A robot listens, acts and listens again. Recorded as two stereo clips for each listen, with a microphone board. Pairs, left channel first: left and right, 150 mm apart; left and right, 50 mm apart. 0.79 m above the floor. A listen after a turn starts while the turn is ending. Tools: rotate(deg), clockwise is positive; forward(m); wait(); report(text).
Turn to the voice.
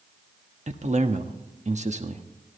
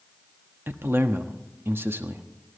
rotate(50)
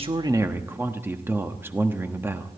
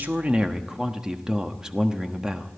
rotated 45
rotate(20)
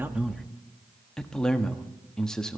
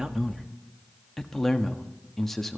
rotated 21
report("Found it: a man speaking, straight ahead.")